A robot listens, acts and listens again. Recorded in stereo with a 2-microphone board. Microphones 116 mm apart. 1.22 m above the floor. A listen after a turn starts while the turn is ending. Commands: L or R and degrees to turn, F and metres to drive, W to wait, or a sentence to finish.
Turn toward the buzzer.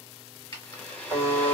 R35
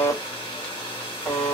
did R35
Facing the buzzer, 1 to 2 m away.